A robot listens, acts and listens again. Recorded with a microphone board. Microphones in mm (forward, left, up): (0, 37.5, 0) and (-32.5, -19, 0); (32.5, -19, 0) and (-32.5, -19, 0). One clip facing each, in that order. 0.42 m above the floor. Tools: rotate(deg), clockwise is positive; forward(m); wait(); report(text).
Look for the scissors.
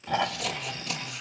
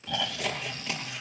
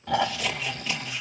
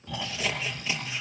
rotate(105)
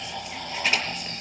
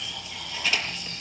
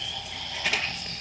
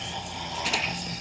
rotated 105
report("Found it: scissors, straight ahead, over 4 m away.")